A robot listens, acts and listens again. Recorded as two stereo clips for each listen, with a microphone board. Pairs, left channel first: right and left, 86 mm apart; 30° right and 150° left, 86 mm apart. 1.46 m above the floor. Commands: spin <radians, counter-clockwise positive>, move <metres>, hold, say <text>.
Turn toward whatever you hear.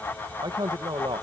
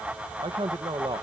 spin 2.09
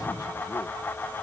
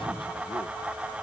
hold
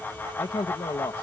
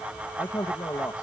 spin -1.31
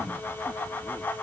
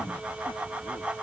hold
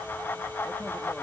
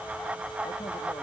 hold
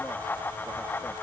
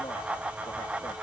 say Facing where the man speaking came from. I can't hear it now.